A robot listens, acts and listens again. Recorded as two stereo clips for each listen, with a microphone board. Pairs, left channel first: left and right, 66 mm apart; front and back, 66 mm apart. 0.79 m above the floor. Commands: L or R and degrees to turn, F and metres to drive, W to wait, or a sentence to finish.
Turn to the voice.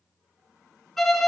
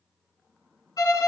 W
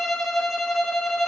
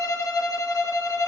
W
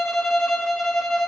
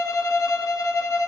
I can't make out anyone speaking to turn to.